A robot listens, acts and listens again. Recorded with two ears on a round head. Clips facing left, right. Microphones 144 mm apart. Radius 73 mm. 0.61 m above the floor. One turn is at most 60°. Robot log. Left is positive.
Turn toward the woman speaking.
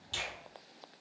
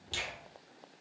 cmd idle
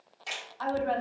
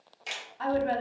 note: The woman speaking: about 25° right or 155° right.
cmd yaw -25
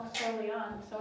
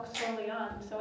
note: So it is at 120° right.
cmd yaw -60
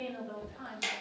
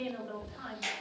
note: The woman speaking is now 70° right.
cmd yaw -60
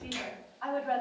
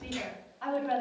note: The woman speaking is now 35° right.
cmd yaw -35
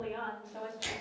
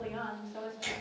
end: Found it: a woman speaking, straight ahead.